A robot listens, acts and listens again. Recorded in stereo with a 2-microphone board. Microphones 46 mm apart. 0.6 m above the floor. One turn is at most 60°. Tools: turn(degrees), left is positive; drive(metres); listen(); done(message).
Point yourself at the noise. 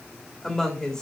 turn(degrees=15)
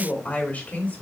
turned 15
turn(degrees=40)
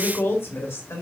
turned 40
turn(degrees=60)
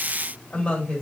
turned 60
turn(degrees=25)
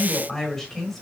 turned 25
done("Found it: a woman speaking, straight ahead, 2 to 4 m away.")